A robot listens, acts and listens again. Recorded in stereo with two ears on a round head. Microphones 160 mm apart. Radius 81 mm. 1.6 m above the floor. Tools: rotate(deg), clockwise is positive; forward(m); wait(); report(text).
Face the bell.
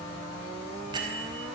rotate(25)
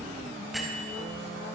report("Facing the bell.")